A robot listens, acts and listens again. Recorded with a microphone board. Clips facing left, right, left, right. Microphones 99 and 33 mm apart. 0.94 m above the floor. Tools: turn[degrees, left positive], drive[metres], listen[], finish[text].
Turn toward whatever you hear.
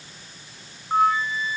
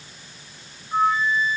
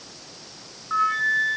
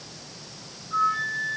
Thought: The flute: about 70° left or 110° left.
Action: turn[70]
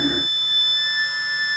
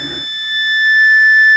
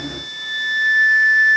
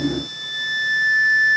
Thought: So it is at 35° left.
Action: turn[35]
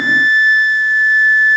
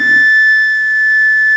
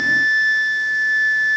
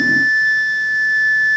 Thought: The flute is now 15° left.
Action: turn[15]
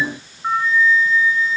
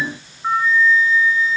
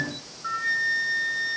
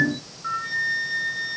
Action: finish[Found it: a flute, straight ahead.]